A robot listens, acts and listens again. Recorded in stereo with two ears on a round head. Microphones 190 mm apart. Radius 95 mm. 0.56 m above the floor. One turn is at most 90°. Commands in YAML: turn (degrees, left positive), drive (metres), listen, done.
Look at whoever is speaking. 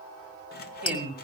turn: -30
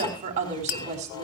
turn: -90
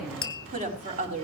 turn: -40
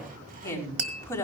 turn: 15
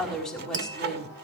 done: "Facing the woman speaking, over 4 m away."